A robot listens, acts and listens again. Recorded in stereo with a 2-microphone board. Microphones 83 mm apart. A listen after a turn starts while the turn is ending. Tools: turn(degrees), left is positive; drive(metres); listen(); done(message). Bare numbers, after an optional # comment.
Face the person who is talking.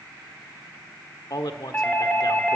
# The man speaking: about 60° left or 120° left.
turn(60)
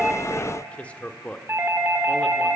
# So it is at 20° left.
turn(20)
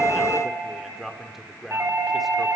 done("Facing the man speaking.")